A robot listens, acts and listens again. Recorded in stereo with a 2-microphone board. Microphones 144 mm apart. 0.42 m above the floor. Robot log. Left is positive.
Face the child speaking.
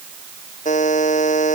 cmd idle
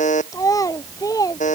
note: The child speaking: about 25° left or 155° left.
cmd yaw +25
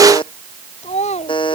note: So it is at 130° left.
cmd yaw +130
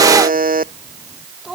end: Found it: a child speaking, straight ahead.